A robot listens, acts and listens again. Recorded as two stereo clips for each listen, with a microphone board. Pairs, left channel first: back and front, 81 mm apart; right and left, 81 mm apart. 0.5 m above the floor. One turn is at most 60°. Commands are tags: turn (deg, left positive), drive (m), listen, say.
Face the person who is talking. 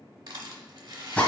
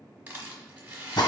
<listen/>
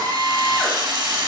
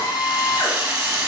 <listen/>
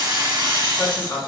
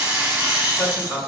<turn deg="-60"/>
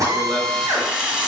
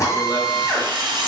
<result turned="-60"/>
<turn deg="-60"/>
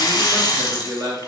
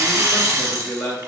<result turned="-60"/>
<turn deg="-20"/>
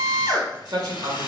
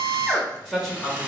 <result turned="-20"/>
<say>Found it: a man speaking, straight ahead.</say>